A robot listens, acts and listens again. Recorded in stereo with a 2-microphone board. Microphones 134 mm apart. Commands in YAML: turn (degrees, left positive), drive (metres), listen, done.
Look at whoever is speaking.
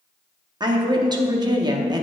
turn: -30
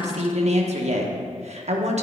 turn: -115
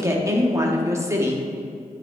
turn: -25
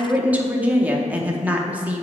turn: -10
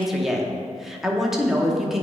done: "Facing the woman speaking, under 1 m away."